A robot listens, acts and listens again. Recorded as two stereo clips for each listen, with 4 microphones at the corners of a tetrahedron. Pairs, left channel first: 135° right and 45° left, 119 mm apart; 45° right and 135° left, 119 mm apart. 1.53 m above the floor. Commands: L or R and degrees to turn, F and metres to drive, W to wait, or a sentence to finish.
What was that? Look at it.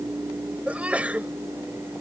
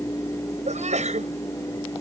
L125
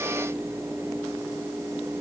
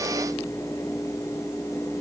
I heard a sneeze from this way, but can't make it out now.